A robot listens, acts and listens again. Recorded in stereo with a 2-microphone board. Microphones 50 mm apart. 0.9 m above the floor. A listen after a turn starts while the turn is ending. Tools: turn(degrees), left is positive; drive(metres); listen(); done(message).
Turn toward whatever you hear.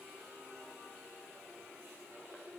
listen()
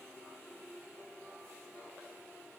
listen()
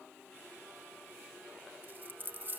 turn(degrees=-40)
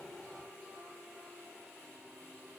listen()
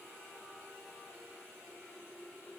done("I heard a dropped coin, but can't make it out now. It was about straight ahead or 100° right.")